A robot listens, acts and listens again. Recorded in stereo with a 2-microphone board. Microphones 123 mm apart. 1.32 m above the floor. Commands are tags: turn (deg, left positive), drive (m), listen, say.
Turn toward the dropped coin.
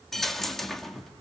<turn deg="30"/>
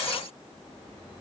<listen/>
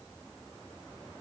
<say>I heard a dropped coin, but can't make it out now. It was about 25° right or 145° left.</say>